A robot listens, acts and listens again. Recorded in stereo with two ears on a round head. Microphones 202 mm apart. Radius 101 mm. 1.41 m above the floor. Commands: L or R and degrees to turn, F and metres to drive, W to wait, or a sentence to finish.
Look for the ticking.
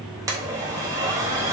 W
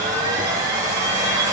W
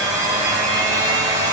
I can't make out ticking, only a blender.